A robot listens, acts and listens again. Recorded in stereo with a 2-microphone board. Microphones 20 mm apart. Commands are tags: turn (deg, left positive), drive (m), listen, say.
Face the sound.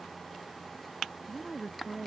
<turn deg="-30"/>
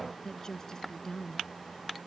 <turn deg="25"/>
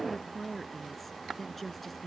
<say>Facing the woman speaking.</say>